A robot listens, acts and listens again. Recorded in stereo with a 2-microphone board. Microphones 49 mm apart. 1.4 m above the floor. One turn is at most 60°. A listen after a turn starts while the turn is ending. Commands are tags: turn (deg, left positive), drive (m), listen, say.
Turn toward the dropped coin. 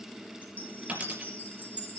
<turn deg="-30"/>
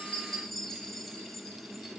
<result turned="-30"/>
<listen/>
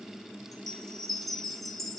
<say>I heard a dropped coin, but can't make it out now. It was about straight ahead or 120° right.</say>